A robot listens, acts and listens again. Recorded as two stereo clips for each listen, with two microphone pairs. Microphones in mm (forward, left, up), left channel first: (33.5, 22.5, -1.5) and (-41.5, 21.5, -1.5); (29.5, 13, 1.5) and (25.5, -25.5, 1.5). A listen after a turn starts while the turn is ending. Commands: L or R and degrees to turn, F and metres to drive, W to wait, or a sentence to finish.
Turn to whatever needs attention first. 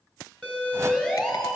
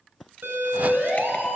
R75
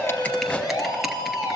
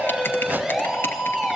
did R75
R15
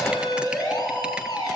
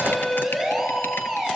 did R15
Facing the siren.